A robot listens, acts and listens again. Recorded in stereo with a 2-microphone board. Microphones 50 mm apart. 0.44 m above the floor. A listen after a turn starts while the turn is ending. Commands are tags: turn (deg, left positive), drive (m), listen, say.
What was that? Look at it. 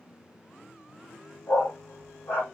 <turn deg="60"/>
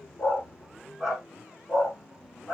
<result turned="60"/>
<say>Facing the dog barking, over 4 m away.</say>